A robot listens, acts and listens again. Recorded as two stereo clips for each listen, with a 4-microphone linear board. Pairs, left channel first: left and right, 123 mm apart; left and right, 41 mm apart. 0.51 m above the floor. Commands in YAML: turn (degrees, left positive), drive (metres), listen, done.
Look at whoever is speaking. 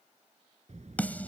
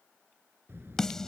turn: -70
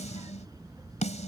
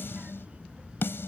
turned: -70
turn: -30
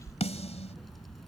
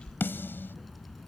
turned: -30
done: "Facing the child speaking."